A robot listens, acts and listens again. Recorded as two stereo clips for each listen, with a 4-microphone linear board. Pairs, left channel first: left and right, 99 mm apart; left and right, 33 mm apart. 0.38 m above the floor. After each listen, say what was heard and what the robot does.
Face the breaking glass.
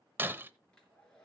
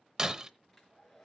The breaking glass: about 20° right or 160° right. Turn 20° right.
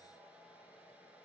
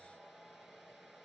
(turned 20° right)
Keep listening.
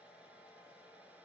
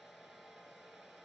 I heard breaking glass, but can't make it out now. It was about straight ahead or 140° right.